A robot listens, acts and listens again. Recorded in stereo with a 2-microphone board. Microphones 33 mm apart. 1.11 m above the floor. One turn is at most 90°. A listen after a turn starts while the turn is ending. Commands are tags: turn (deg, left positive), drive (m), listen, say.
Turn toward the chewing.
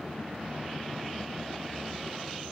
<listen/>
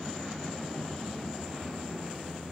<listen/>
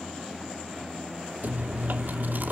<turn deg="-90"/>
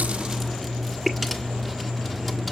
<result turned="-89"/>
<say>Facing the chewing, 1 to 2 m away.</say>